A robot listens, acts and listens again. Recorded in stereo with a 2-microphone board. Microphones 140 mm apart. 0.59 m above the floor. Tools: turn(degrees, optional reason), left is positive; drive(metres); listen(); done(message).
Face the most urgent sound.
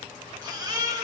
turn(degrees=-25, reason="The baby crying: about 25° right or 155° right.")
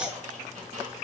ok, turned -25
done("Facing the baby crying.")